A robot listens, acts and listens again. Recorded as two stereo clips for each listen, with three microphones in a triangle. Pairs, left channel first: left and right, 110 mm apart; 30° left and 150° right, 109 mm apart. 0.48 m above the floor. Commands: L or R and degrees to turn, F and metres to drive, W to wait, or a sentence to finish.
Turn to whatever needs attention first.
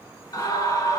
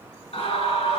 L35
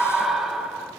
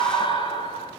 Facing the scream, 2 to 4 m away.